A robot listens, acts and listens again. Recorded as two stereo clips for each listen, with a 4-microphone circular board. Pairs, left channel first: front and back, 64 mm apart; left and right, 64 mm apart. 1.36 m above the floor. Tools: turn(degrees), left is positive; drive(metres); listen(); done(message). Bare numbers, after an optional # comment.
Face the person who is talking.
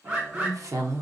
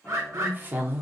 # The woman speaking: 150° right.
turn(-150)
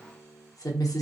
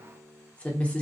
# The woman speaking is now 20° left.
turn(20)
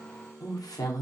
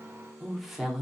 done("Found it: a woman speaking, straight ahead.")